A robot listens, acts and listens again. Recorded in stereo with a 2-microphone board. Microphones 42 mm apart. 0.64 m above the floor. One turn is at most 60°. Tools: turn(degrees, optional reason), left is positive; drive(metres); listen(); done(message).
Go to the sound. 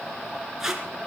turn(degrees=-30)
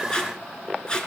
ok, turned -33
turn(degrees=20, reason="So it is at 20° left.")
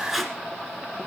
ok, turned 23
drive(metres=1.0)
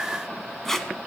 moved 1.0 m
turn(degrees=10, reason="The tape being pulled is now 10° left.")
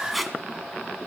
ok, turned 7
drive(metres=1.0)
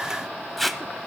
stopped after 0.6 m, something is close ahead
done("I am next to the tape being pulled.")